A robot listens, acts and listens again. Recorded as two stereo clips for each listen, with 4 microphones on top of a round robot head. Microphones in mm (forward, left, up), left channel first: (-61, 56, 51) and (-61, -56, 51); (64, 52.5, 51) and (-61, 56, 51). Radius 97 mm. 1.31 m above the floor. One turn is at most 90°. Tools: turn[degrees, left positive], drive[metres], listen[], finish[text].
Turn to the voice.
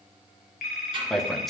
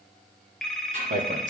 Thought: The man speaking: straight behind.
Action: turn[90]
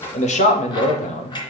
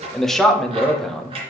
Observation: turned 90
Thought: The man speaking is now 85° left.
Action: turn[85]
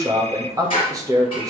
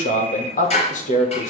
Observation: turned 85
Thought: The man speaking is now 25° right.
Action: turn[-25]
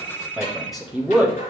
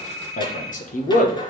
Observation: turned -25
Action: finish[Facing the man speaking.]